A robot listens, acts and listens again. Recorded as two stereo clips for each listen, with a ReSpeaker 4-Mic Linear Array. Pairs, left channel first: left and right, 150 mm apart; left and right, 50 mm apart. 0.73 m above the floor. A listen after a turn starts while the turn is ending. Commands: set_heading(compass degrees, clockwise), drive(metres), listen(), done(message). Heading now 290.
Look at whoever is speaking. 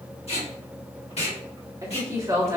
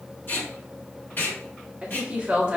set_heading(310)
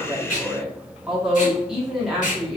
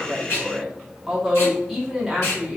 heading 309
done("Found it: a woman speaking, straight ahead, 1 to 2 m away.")